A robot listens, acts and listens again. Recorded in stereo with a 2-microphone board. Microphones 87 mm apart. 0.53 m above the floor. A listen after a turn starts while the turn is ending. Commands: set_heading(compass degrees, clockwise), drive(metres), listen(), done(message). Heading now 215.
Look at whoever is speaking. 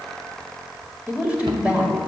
set_heading(245)
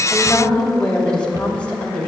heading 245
set_heading(230)
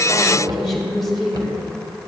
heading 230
done("Found it: a woman speaking, straight ahead.")